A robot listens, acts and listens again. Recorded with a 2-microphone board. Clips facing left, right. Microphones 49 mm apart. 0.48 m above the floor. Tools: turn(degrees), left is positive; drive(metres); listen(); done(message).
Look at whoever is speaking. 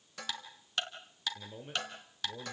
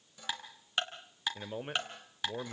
turn(degrees=-60)
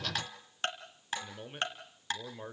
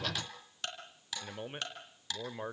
turn(degrees=-30)
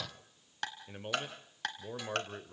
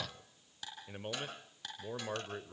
done("Facing the man speaking, 1 to 2 m away.")